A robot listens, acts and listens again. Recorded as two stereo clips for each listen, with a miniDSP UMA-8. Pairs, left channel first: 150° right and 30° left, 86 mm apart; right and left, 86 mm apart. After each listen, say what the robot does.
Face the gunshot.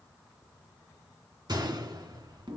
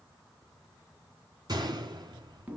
Turn 60° left.
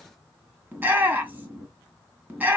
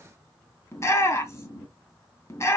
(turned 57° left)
Facing where the gunshot came from. I can't hear it now.